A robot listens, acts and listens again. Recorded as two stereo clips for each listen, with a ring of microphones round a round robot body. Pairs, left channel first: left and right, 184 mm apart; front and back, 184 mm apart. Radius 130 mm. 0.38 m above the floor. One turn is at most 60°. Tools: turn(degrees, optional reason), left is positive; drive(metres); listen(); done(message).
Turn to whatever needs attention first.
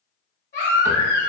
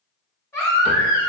turn(degrees=60, reason="The baby crying: 75° left.")
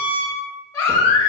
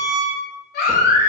turn(degrees=15, reason="The baby crying is now 15° left.")
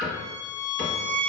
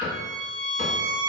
listen()
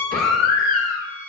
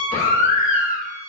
done("Facing the baby crying, 1 to 2 m away.")